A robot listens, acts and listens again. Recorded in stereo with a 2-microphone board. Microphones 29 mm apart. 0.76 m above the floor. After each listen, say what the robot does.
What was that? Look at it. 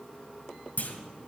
Turn 60° left.
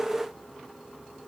Keep listening.
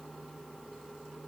I heard a clunk, but can't make it out now. It was about straight ahead or 60° left.